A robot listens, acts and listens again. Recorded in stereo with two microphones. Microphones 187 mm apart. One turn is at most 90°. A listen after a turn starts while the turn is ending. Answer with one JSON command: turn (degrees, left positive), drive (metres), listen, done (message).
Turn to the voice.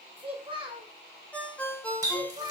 {"turn": -30}
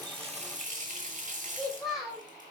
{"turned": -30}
{"done": "Facing the child speaking, 1 to 2 m away."}